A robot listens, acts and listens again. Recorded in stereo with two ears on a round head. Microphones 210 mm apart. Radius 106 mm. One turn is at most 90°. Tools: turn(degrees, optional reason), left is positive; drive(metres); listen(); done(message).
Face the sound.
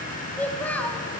turn(degrees=30)
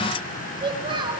turn(degrees=-20, reason="So it is at 20° right.")
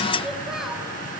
done("Found it: a child speaking, straight ahead.")